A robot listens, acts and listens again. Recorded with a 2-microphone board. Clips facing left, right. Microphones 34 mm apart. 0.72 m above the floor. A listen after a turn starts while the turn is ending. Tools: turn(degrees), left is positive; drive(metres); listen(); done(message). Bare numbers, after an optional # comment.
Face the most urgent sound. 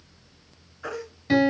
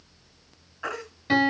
# The baby crying: about 60° right or 120° right.
turn(-60)
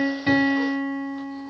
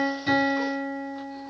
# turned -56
listen()
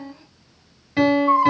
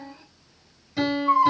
done("Found it: a baby crying, straight ahead.")